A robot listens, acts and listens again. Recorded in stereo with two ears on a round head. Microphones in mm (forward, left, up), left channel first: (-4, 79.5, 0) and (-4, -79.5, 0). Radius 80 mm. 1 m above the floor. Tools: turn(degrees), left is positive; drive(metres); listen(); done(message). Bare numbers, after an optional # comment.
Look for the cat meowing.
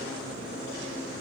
listen()
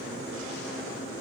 listen()
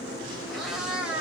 turn(-30)
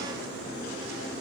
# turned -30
listen()
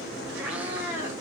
turn(-30)
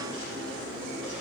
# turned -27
listen()
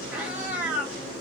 turn(-30)
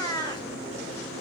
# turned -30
# So it is at 20° left.
turn(20)
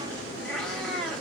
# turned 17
done("Found it: a cat meowing, straight ahead.")